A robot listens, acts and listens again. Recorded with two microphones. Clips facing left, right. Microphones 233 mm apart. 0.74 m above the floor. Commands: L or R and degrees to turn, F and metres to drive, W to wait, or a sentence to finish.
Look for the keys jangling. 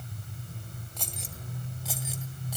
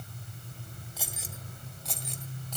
L30
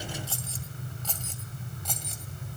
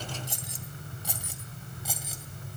Found it: keys jangling, straight ahead.